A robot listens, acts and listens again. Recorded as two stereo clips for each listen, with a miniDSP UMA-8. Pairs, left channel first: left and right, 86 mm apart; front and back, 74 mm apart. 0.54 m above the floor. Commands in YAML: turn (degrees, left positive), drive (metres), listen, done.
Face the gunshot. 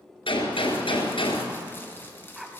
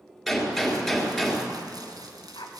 turn: 85
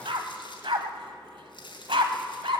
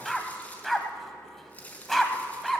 done: "I heard a gunshot from this way, but can't make it out now."